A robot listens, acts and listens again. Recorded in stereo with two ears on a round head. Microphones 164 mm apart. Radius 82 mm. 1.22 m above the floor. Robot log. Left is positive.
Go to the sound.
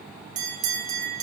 note: The bell: about 40° right or 140° right.
cmd yaw -40
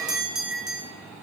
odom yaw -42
cmd fwd 1.0
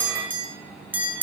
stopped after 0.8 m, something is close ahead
note: The bell is now 10° right.
cmd yaw -10
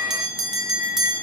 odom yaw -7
end: Arrived at the bell, straight ahead.